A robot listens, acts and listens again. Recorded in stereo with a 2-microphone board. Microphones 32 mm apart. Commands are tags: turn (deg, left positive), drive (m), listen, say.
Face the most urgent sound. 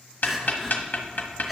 <turn deg="30"/>
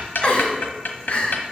<turn deg="150"/>
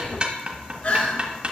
<turn deg="45"/>
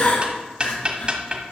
<turn deg="45"/>
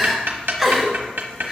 <turn deg="-10"/>
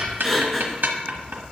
<say>Facing the crying.</say>